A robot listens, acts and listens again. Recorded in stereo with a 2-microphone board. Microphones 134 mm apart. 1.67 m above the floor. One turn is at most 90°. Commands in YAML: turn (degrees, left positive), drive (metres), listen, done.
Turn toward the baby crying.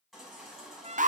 turn: 30
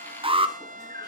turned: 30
turn: 90
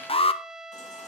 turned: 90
turn: 60
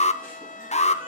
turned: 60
listen: true
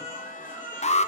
turn: -15
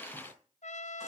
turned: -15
listen: true
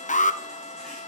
listen: true
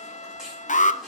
done: "Facing the baby crying, over 4 m away."